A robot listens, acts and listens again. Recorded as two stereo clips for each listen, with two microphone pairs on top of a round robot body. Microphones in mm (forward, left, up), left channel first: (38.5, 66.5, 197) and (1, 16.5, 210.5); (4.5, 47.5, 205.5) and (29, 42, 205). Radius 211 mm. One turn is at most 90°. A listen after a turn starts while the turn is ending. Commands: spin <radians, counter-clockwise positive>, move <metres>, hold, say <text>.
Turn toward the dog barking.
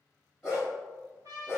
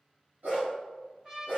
spin -1.05
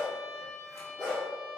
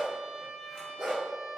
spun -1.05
spin -0.44
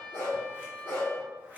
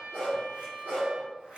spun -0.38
spin -0.52
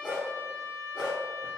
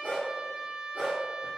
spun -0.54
spin -0.52
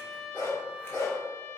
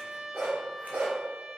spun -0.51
spin -0.17
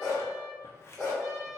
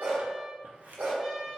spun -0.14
say Facing the dog barking.